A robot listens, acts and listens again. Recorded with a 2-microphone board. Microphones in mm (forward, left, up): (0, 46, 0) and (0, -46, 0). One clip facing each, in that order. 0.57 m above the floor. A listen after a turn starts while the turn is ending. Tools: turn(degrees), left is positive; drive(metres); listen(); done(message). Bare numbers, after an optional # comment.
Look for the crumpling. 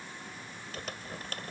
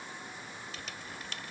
# The crumpling: about 45° left or 135° left.
turn(45)
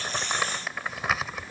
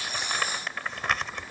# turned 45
done("Facing the crumpling.")